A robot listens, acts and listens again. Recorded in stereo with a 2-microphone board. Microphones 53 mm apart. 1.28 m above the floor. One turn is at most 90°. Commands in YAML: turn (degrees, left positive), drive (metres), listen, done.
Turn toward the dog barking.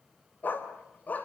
turn: 35
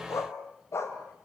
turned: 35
turn: 90
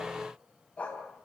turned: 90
turn: 25
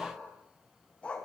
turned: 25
turn: 20
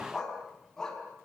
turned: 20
turn: 10
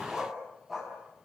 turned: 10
done: "Facing the dog barking, over 4 m away."